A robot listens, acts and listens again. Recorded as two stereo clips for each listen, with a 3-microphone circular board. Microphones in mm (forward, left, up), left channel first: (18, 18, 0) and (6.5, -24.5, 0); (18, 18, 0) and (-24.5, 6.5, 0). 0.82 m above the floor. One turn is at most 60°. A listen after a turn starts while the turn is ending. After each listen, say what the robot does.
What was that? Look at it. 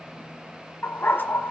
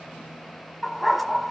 Turn 60° left.
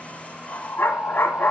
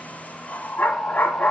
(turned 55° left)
Turn 55° left.
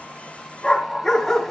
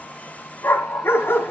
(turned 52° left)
Facing the dog barking.